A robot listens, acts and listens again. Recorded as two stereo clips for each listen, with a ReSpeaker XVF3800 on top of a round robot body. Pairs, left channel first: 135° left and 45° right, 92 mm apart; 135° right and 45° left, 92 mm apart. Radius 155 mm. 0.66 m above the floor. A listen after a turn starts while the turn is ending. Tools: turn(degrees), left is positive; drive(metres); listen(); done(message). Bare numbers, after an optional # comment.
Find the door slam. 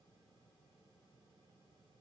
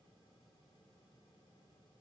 listen()
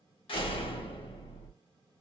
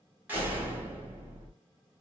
# The door slam: 115° left.
turn(115)
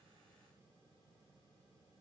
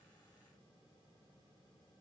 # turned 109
done("I heard a door slam from this way, but can't make it out now.")